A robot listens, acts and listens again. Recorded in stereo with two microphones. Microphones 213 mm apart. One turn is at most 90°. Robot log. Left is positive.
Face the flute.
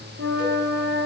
note: The flute: about 70° right or 110° right.
cmd yaw -70
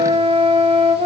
note: So it is at 30° right.
cmd yaw -30
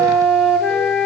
end: Facing the flute, 1 to 2 m away.